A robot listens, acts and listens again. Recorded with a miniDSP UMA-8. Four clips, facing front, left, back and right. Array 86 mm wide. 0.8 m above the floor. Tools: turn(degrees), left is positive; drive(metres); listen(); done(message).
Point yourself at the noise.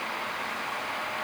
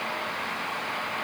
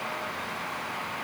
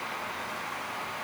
listen()
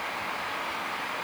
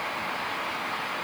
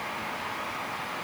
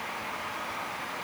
listen()
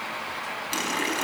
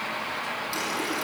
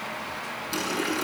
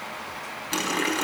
turn(degrees=-60)
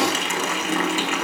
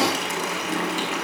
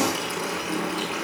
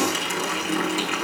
done("Found it: a running tap, straight ahead, over 4 m away.")